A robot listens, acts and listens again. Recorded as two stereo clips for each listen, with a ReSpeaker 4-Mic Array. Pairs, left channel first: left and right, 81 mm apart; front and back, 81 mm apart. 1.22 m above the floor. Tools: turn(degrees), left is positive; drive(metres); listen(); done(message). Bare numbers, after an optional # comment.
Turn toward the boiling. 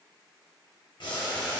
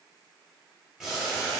# The boiling: 90° left.
turn(90)
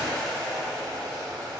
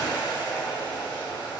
done("Facing the boiling.")